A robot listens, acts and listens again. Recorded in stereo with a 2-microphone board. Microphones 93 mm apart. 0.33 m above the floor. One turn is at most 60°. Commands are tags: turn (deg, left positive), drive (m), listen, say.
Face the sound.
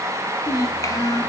<turn deg="35"/>
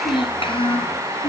<turn deg="60"/>
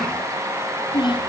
<turn deg="60"/>
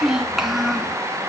<say>Found it: a child speaking, straight ahead, 2 to 4 m away.</say>